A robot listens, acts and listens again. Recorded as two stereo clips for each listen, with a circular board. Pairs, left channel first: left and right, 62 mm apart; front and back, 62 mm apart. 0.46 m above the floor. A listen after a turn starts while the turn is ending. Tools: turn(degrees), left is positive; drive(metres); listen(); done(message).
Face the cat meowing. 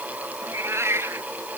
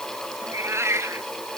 turn(degrees=-135)
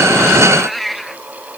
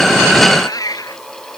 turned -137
done("Facing the cat meowing.")